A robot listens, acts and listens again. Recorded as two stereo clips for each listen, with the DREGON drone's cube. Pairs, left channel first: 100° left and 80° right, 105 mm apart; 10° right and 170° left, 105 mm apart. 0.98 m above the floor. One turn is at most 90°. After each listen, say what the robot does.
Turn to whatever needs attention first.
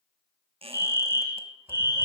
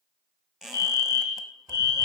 Turn 90° right.
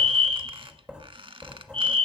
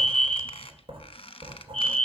Turn 85° right.
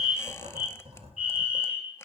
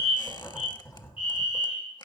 Facing the fire alarm.